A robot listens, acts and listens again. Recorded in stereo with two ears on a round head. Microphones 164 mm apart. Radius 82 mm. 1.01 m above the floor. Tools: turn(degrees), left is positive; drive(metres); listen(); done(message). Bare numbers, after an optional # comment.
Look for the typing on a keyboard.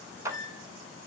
listen()
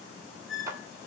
listen()
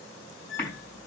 turn(30)
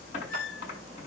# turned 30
# So it is at 140° left.
turn(140)
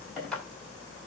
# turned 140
done("Facing the typing on a keyboard, over 4 m away.")